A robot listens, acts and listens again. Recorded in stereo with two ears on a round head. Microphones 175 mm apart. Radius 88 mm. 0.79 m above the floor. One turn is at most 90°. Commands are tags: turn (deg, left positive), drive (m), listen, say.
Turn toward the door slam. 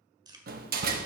<turn deg="-50"/>
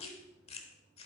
<listen/>
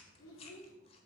<say>I heard a door slam, but can't make it out now. It was about straight ahead or 80° right.</say>